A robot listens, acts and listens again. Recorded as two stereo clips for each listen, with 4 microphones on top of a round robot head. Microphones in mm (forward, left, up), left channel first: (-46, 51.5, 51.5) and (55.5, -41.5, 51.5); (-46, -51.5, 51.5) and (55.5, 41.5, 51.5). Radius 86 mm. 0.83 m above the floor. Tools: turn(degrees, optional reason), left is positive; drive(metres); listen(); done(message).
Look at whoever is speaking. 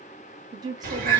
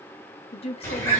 turn(degrees=-100, reason="The woman speaking: 100° right.")
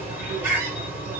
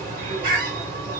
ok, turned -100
listen()
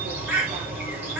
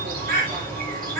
listen()
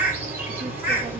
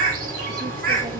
done("Facing where the woman speaking came from. I can't hear it now.")